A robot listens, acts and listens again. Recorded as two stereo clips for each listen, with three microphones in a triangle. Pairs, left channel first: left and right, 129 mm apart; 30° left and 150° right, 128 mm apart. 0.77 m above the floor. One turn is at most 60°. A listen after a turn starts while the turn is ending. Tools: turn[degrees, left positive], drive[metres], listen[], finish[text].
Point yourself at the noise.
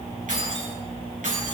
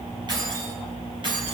Thought: The keys jangling: 100° right.
Action: turn[-60]
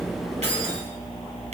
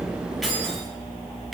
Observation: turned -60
Thought: The keys jangling is now 60° right.
Action: turn[-60]
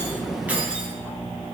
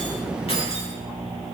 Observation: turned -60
Action: listen[]
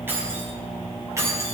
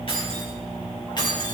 Thought: The keys jangling is now 25° right.
Action: turn[-25]
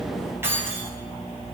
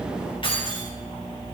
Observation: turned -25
Thought: The keys jangling is now 20° right.
Action: turn[-20]
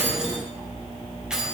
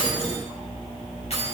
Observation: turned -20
Action: finish[Found it: keys jangling, straight ahead.]